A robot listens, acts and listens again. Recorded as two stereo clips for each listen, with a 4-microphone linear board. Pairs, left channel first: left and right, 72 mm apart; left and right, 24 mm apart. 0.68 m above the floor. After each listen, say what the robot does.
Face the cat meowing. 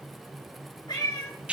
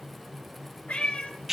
Turn 90° left.
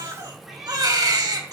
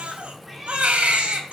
Found it: a cat meowing, straight ahead.